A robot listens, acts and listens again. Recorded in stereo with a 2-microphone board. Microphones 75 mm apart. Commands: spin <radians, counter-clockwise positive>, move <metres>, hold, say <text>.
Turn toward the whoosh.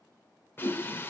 spin 1.57
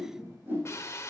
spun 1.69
spin -0.44
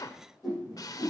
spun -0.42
say Facing the whoosh.